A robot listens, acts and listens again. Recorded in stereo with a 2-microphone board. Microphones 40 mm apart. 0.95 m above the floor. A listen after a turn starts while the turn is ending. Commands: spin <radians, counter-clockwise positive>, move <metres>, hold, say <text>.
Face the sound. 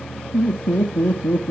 spin 1.13
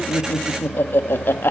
spin 1.13
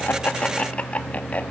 spin 0.70
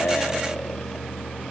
hold
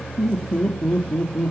spin 0.44
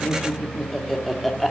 say Facing the laughter.